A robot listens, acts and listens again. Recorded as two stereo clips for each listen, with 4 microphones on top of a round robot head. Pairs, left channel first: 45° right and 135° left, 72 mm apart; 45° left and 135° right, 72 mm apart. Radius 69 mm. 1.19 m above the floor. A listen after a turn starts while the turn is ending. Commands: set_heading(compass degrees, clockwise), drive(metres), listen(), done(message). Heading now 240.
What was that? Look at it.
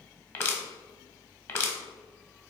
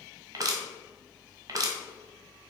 set_heading(340)
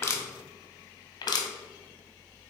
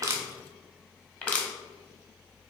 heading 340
set_heading(5)
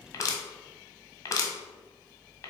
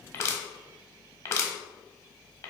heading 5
done("Facing the crushing, 1 to 2 m away.")